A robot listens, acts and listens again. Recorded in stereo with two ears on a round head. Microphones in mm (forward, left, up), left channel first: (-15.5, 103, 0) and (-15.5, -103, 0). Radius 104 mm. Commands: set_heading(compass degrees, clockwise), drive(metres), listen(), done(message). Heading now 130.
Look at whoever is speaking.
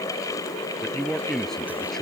set_heading(100)
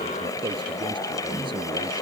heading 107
listen()
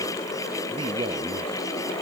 listen()
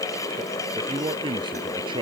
set_heading(127)
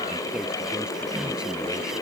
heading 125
listen()
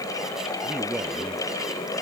done("Facing the man speaking.")